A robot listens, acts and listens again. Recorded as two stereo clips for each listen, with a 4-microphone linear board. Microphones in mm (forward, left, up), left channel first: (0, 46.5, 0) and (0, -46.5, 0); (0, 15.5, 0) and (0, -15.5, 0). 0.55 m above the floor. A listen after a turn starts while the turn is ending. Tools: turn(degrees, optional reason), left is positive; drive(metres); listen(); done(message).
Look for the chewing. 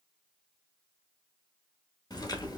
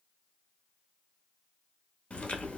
turn(degrees=45, reason="The chewing: about 45° left or 135° left.")
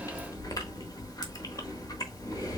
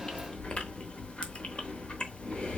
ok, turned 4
turn(degrees=40, reason="The chewing: about 40° left or 140° left.")
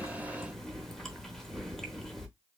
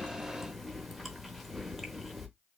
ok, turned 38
done("Found it: chewing, straight ahead.")